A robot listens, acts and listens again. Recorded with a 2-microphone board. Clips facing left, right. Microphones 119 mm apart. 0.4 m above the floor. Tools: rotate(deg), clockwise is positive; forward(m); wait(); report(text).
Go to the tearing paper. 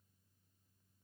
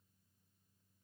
wait()
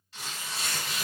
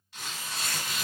rotate(-30)
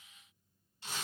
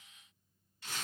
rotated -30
rotate(-150)
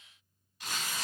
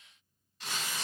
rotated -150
forward(1.0)
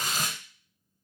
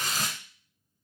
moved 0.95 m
rotate(-15)
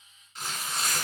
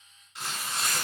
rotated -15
forward(1.0)
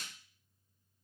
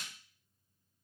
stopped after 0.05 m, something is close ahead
wait()
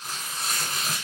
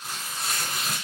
report("I am next to the tearing paper.")